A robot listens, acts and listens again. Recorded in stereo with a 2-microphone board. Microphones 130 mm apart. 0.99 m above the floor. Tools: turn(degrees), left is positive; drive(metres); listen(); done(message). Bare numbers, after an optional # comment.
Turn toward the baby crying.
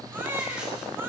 # The baby crying: about 15° right or 165° right.
turn(-15)
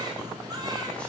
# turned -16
listen()
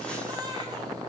# So it is at 150° right.
turn(-150)
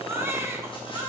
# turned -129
# The baby crying is now 15° right.
turn(-15)
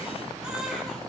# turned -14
done("Found it: a baby crying, straight ahead.")